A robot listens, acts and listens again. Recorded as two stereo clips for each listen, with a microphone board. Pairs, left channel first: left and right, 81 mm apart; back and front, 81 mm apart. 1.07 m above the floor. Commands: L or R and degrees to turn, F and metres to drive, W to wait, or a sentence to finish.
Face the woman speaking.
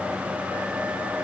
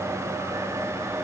W
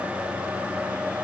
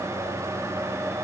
W
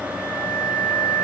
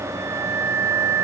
I can't make out a woman speaking, only a flute.